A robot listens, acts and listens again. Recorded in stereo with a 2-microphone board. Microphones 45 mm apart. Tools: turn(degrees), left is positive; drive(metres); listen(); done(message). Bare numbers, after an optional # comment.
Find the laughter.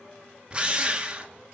listen()
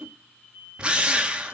listen()
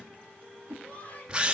# The laughter: about 35° left or 145° left.
turn(35)
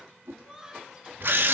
# So it is at 10° right.
turn(-10)
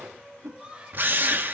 # The laughter is now 20° right.
turn(-20)
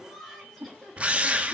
done("Facing the laughter.")